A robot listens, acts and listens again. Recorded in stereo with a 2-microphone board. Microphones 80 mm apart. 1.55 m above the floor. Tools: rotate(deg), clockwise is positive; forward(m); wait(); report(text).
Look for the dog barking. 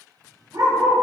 rotate(60)
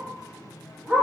rotate(25)
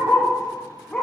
rotate(-15)
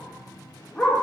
rotate(-10)
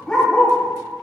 rotate(-15)
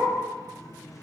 wait()
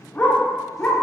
rotate(-20)
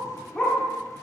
rotate(-10)
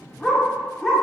report("Facing the dog barking.")